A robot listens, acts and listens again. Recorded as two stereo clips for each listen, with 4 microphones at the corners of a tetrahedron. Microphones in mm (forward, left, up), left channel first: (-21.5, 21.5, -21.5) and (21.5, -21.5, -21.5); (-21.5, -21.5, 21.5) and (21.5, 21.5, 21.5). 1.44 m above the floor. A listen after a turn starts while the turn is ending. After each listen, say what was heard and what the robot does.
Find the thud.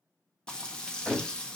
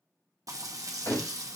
The thud: 135° right. Turn 135° right.
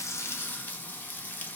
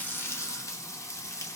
Facing where the thud came from. I can't hear it now.